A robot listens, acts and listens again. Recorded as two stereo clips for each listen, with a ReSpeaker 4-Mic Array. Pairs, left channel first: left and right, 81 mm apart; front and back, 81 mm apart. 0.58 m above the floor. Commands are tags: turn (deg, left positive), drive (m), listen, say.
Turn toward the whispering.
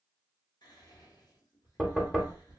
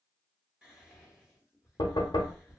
<turn deg="100"/>
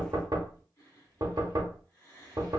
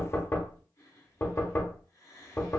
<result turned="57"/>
<turn deg="45"/>
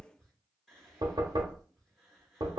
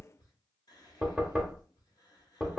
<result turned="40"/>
<say>Found it: whispering, straight ahead.</say>